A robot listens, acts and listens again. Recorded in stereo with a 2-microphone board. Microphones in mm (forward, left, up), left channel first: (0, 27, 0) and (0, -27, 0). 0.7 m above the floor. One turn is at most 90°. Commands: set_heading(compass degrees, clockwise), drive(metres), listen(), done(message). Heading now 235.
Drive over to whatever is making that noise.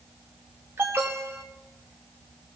set_heading(280)
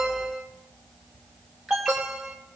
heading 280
drive(1.0)
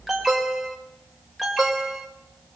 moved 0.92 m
drive(1.0)
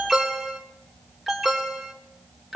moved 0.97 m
drive(1.0)
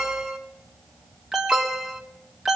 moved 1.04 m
drive(1.0)
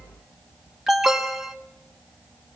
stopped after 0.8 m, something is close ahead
set_heading(290)
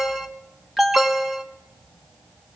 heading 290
done("I am next to the alarm.")